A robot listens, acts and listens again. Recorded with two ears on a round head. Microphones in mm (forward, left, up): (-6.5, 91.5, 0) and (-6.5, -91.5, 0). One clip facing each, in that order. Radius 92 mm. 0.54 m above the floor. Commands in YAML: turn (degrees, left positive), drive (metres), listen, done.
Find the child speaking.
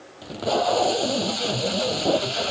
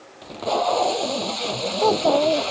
turn: -90
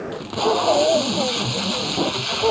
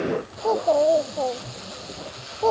turn: 10
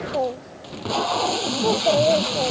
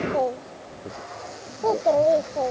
done: "Found it: a child speaking, straight ahead."